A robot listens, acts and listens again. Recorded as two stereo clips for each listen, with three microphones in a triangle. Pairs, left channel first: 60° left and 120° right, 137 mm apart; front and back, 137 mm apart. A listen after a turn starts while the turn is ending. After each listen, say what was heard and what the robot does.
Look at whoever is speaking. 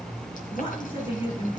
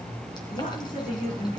The woman speaking: 15° left. Turn 15° left.
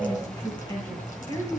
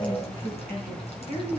Facing the woman speaking, over 4 m away.